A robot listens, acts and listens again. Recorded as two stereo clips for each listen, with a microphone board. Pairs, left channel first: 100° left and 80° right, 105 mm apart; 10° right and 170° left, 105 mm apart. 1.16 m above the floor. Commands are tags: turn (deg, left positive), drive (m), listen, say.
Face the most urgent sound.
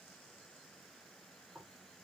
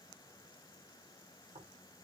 <listen/>
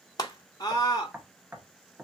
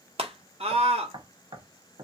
<turn deg="150"/>
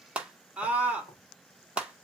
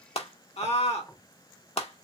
<say>Facing the scream, 1 to 2 m away.</say>